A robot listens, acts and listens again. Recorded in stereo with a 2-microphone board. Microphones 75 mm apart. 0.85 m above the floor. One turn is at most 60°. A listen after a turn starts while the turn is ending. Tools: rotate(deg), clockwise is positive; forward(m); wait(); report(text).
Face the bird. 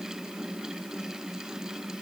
wait()
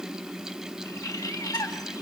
rotate(-50)
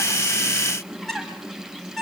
report("Found it: a bird, straight ahead.")